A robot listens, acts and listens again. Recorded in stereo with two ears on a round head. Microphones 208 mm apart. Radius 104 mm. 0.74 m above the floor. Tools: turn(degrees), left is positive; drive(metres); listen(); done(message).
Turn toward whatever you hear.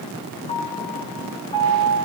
turn(degrees=25)
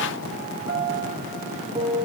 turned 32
turn(degrees=-10)
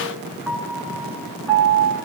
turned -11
done("Found it: a piano, straight ahead, 2 to 4 m away.")